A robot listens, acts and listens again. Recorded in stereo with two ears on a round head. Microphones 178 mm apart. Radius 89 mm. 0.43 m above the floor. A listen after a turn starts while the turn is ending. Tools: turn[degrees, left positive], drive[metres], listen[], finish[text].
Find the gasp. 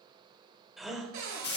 Action: turn[30]
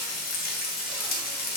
Action: listen[]
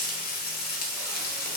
Action: finish[I heard a gasp, but can't make it out now. It was about 30° right or 150° left.]